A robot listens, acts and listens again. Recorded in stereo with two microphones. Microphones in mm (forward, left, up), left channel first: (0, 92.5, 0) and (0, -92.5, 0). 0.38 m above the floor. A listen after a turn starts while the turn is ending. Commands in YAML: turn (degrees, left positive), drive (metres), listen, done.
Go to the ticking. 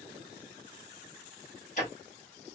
turn: 45
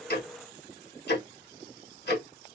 turn: 80
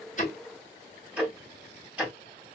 turn: -10
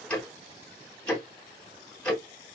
drive: 1.0
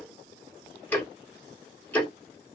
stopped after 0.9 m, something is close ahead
turn: 10
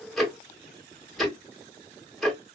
done: "Arrived at the ticking, straight ahead."